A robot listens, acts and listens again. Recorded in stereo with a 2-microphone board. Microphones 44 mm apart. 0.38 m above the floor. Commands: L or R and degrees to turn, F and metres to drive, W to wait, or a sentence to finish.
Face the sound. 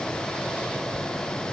W
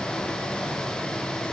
W
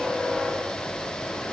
I can't make out anything.